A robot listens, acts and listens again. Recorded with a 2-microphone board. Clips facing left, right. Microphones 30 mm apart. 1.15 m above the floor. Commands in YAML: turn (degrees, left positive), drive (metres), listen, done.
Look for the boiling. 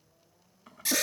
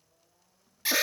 turn: 70
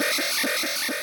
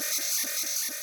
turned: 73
listen: true
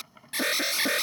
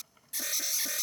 turn: 35
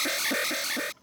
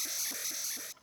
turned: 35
done: "Found it: boiling, straight ahead."